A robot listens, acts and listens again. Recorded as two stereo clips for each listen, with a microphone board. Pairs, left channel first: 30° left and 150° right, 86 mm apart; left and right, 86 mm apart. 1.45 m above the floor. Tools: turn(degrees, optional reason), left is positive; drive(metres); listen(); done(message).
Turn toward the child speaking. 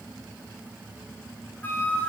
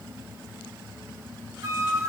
listen()
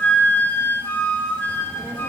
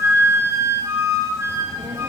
turn(degrees=-90, reason="The child speaking: 90° right.")
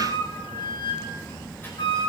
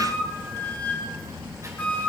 turn(degrees=-35, reason="The child speaking is now 35° right.")
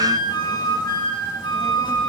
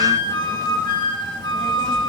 listen()
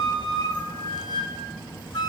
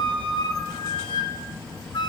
turn(degrees=10, reason="The child speaking is now 10° left.")
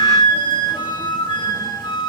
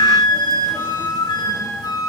listen()
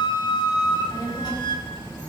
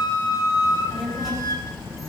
done("Found it: a child speaking, straight ahead.")